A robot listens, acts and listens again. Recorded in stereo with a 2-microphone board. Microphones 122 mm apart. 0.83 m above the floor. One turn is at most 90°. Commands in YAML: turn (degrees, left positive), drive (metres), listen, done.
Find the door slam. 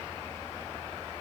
listen: true
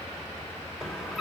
turn: 30
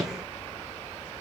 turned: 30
listen: true
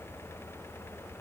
done: "I heard a door slam, but can't make it out now. It was about 30° right or 150° left."